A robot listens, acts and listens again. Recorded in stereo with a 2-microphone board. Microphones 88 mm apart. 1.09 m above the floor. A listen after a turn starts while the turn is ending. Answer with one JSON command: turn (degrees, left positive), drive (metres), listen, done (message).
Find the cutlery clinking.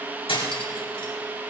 {"turn": 90}
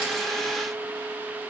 {"listen": true}
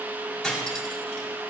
{"done": "Found it: cutlery clinking, straight ahead, over 4 m away."}